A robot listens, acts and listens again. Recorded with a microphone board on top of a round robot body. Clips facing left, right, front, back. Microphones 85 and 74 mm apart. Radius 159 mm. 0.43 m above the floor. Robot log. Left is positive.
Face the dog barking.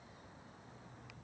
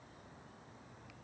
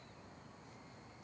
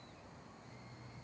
cmd idle
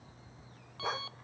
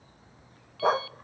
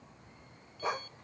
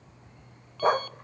note: The dog barking: 135° right.
cmd yaw -135
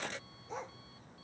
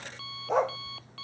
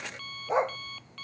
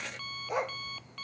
note: The dog barking is now 65° right.
cmd yaw -65
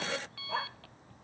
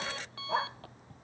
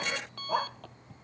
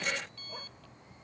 note: The dog barking is now 20° right.
cmd yaw -20
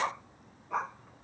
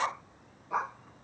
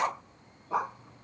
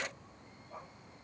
end: Facing the dog barking.